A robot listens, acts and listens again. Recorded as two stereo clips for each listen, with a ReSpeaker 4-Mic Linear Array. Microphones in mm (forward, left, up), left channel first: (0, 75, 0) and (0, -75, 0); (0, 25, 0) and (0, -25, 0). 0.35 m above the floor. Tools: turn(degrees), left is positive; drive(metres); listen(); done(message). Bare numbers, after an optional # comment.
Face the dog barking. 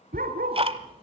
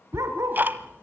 turn(-90)
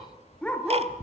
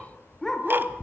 done("Facing the dog barking.")